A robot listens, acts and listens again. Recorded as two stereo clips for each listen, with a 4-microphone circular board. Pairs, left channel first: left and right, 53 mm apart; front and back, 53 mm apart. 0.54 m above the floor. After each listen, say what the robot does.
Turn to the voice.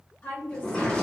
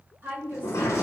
Turn 135° left.
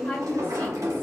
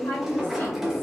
Turn 25° left.
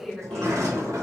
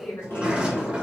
Turn 10° left.
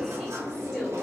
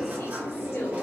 Keep listening.
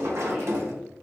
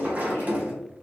Keep listening.
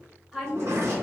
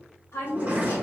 Facing the woman speaking, 1 to 2 m away.